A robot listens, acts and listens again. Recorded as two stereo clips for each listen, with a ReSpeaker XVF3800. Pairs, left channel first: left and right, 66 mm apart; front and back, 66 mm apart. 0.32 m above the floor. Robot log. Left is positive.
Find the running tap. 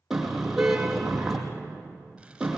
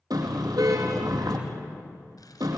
cmd idle
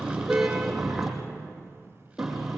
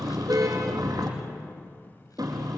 cmd idle
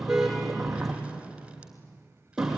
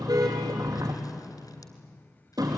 end: I can't make out a running tap, only a car horn.